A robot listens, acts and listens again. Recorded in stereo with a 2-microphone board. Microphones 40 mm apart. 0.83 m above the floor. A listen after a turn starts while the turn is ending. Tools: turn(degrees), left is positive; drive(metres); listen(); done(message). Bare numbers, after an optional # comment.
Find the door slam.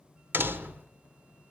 # The door slam: about 70° right or 110° right.
turn(-70)
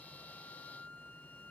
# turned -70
listen()
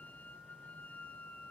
done("I heard a door slam, but can't make it out now. It was about straight ahead or 40° right.")